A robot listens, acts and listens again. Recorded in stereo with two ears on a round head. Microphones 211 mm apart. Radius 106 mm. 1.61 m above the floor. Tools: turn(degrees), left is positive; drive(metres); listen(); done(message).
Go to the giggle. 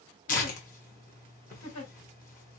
turn(degrees=70)
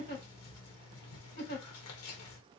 turn(degrees=45)
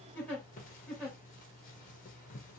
drive(metres=1.0)
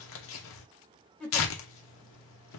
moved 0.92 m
drive(metres=1.0)
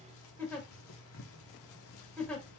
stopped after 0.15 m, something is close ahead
done("I am next to the giggle.")